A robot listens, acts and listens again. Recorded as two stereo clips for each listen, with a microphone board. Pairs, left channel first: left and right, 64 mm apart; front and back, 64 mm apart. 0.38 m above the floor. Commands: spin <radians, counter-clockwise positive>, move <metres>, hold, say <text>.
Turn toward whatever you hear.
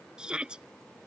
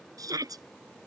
spin -2.88
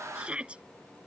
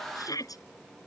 spin -0.26
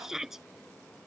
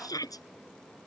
say Found it: a shout, straight ahead.